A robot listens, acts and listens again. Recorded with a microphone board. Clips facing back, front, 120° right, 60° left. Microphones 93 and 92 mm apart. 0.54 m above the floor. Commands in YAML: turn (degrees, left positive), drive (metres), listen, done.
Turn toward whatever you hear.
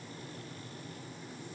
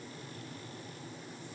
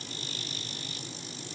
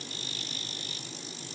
listen: true
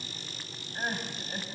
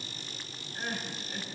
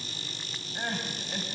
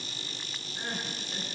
turn: -135
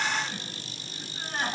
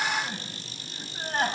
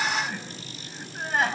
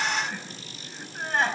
turn: -35
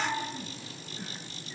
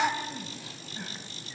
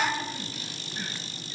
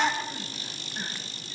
done: "Found it: crying, straight ahead."